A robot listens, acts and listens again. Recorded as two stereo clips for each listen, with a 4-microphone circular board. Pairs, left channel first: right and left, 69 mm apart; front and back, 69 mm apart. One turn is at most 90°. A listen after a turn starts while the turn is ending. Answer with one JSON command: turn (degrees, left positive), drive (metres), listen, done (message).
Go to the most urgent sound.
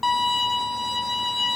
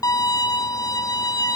{"listen": true}
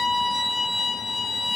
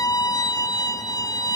{"listen": true}
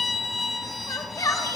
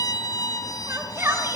{"turn": -90}
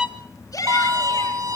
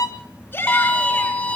{"turn": -60}
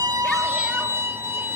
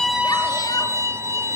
{"listen": true}
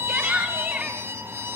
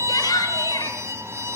{"turn": 10}
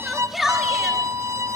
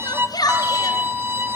{"drive": 1.0}
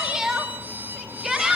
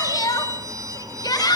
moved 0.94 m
{"drive": 1.0}
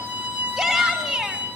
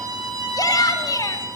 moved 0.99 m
{"drive": 1.0}
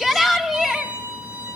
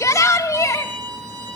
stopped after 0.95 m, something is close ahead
{"done": "I am next to the shout."}